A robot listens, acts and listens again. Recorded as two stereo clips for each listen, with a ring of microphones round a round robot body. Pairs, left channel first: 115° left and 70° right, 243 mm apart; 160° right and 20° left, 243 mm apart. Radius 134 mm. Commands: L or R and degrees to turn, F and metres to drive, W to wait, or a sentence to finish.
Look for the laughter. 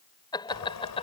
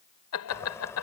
L180
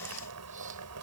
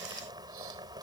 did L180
W
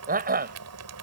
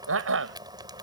R15
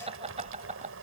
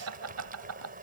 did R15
Found it: laughter, straight ahead.